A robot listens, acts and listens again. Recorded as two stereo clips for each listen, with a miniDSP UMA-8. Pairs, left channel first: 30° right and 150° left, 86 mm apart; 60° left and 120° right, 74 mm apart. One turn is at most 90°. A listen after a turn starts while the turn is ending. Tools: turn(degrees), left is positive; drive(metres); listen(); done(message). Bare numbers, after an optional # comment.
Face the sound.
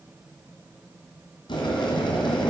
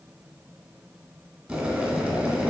# The boiling: 40° right.
turn(-40)
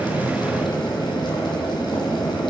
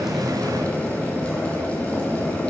done("Found it: boiling, straight ahead.")